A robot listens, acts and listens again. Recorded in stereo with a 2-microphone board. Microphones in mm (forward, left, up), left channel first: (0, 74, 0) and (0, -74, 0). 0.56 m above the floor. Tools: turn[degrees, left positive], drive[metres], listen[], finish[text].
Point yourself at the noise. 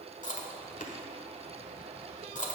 Thought: The chewing: about 55° left or 125° left.
Action: turn[55]
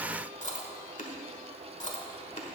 Thought: So it is at 60° left.
Action: turn[60]
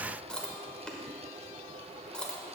Action: finish[Found it: chewing, straight ahead.]